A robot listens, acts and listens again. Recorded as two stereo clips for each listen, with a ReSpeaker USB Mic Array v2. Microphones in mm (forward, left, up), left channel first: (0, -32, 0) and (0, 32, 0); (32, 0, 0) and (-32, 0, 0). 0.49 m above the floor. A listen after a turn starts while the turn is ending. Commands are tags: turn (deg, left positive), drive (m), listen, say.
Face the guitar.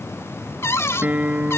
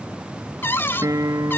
<turn deg="155"/>
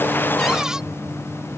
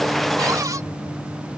<listen/>
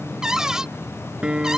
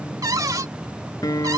<turn deg="15"/>
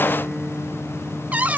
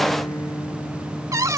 <say>Found it: a guitar, straight ahead.</say>